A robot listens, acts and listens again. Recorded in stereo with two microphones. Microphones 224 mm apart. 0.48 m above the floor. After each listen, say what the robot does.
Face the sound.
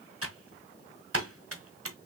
Turn 90° right.
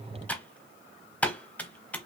Facing the typing on a keyboard.